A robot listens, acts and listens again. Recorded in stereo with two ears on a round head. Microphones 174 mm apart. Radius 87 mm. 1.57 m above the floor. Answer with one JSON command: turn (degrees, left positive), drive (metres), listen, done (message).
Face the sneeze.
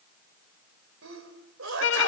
{"turn": -90}
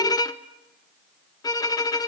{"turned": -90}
{"done": "Facing where the sneeze came from. I can't hear it now."}